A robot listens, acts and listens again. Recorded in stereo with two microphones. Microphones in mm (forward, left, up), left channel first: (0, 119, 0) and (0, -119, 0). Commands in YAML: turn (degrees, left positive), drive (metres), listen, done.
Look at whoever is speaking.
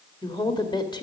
turn: 20
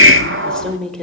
done: "Found it: a woman speaking, straight ahead."